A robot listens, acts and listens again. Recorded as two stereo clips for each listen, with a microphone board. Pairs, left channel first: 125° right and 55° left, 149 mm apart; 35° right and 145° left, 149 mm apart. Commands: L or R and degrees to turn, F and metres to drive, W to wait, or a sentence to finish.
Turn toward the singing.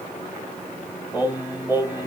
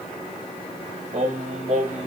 L130
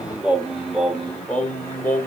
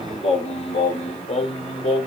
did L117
R55
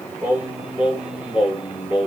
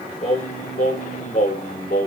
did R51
R25
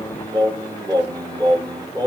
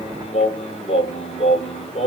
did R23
Facing the singing.